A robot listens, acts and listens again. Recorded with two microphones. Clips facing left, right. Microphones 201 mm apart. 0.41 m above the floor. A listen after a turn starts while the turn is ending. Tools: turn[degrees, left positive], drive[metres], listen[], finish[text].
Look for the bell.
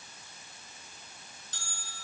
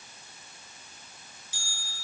Action: turn[-30]
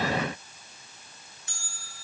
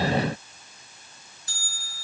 Thought: So it is at 145° right.
Action: turn[-145]
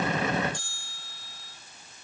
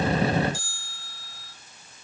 Action: finish[Found it: a bell, straight ahead.]